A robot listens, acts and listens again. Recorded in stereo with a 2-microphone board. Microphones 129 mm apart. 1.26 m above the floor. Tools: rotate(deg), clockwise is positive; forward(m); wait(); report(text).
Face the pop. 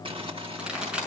rotate(30)
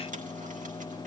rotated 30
wait()
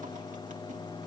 report("I heard a pop, but can't make it out now. It was about 25° left or 145° right.")